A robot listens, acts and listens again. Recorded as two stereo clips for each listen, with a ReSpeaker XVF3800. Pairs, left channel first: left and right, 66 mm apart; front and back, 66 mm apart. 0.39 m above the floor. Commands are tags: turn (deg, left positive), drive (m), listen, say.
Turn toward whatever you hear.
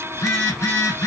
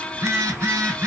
<turn deg="130"/>
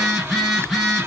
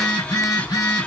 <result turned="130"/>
<say>Facing the phone buzzing, 1 to 2 m away.</say>